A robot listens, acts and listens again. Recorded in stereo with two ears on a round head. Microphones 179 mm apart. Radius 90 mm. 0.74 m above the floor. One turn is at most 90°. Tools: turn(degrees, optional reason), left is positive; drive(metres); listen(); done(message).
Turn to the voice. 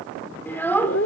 turn(degrees=30)
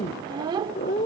turn(degrees=-20, reason="So it is at 20° right.")
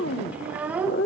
done("Facing the child speaking, 1 to 2 m away.")